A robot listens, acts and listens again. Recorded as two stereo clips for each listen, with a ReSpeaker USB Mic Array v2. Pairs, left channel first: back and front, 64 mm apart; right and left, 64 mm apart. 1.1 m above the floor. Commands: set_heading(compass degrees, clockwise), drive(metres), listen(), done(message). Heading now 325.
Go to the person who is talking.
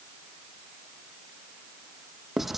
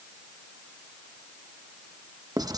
listen()
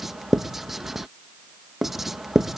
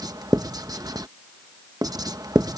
listen()
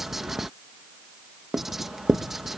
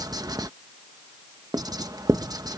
done("I can't make out anyone speaking, only writing.")